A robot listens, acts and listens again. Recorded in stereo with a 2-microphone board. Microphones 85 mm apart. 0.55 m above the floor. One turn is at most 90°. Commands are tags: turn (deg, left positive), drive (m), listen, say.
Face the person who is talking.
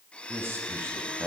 <turn deg="-30"/>
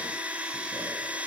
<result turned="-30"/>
<listen/>
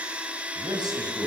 <turn deg="-90"/>
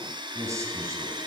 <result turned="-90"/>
<turn deg="-40"/>
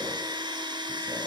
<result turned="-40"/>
<listen/>
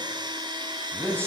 <turn deg="-30"/>
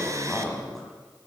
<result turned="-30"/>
<say>Found it: a man speaking, straight ahead.</say>